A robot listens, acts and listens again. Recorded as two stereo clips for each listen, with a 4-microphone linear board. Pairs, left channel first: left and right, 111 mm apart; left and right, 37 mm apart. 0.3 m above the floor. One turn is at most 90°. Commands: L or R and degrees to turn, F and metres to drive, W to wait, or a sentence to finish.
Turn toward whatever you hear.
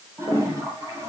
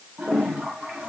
R30
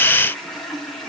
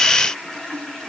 Found it: a toilet flushing, straight ahead.